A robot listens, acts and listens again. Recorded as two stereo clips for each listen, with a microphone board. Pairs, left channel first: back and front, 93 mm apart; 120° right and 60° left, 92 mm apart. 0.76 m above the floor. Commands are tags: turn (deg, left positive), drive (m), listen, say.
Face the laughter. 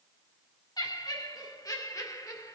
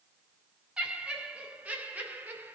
<turn deg="130"/>
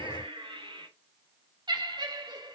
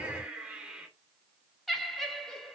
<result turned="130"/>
<turn deg="-35"/>
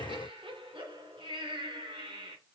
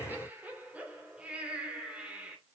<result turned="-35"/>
<turn deg="-15"/>
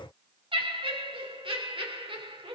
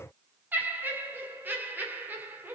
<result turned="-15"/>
<turn deg="-10"/>
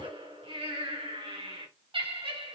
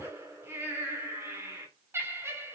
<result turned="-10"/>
<say>Facing the laughter.</say>